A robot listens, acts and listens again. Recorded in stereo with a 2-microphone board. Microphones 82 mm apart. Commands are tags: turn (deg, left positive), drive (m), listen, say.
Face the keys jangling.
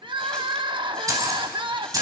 <turn deg="-45"/>
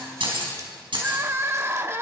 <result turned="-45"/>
<turn deg="-100"/>
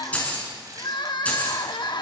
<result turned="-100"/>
<turn deg="15"/>
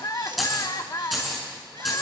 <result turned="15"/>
<say>Facing the keys jangling.</say>